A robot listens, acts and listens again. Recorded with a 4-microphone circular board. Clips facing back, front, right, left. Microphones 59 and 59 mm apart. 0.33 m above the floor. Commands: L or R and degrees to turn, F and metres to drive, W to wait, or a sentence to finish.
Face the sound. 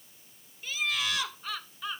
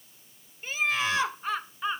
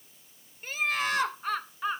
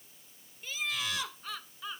R55
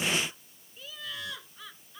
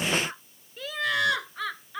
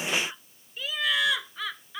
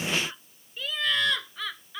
R10
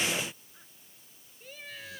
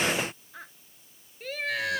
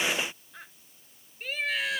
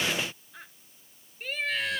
Facing the laughter.